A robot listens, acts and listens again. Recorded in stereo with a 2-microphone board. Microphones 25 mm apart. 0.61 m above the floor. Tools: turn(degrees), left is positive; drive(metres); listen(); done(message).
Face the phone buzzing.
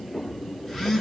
turn(degrees=30)
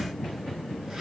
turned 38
turn(degrees=-25)
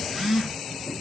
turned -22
done("Found it: a phone buzzing, straight ahead.")